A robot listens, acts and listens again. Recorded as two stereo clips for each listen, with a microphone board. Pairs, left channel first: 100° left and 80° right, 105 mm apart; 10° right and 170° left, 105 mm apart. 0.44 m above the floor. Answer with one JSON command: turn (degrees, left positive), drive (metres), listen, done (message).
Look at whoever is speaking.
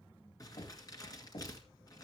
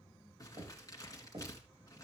{"listen": true}
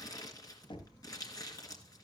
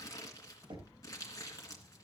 {"listen": true}
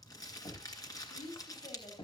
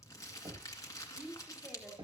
{"turn": 95}
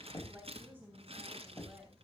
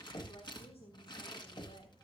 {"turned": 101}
{"done": "Found it: a woman speaking, straight ahead."}